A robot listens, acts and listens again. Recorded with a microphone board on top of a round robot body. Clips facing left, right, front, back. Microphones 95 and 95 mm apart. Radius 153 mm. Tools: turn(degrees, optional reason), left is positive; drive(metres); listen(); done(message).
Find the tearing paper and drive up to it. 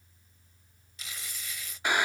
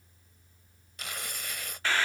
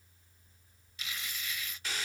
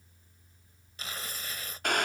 turn(degrees=-125, reason="The tearing paper: 125° right.")
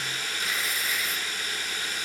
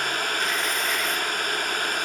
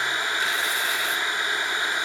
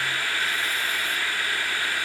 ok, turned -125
listen()
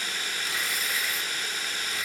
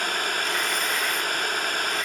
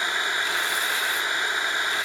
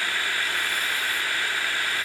listen()
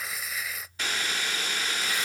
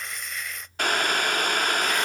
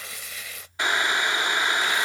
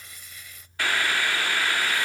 drive(metres=1.0)
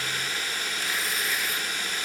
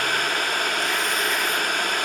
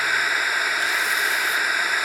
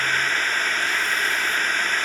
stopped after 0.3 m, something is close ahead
listen()
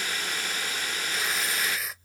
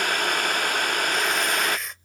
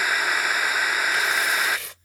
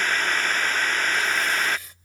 done("Something is in my way. I am facing the tearing paper but have not reached it.")